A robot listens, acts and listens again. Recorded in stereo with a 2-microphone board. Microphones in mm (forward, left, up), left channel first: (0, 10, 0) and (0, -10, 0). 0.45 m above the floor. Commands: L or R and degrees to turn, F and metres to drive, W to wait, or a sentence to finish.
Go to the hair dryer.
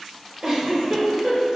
W
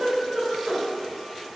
W
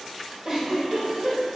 I can't make out a hair dryer, only a giggle.